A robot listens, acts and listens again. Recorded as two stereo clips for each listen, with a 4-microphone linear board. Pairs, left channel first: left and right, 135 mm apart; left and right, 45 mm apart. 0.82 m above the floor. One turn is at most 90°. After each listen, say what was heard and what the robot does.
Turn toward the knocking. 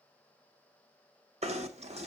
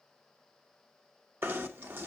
The knocking: about 50° right or 130° right. Turn 50° right.
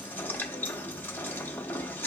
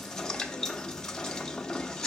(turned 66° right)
So it is at 15° left. Turn 15° left.
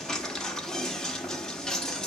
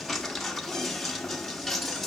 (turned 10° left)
Found it: knocking, straight ahead.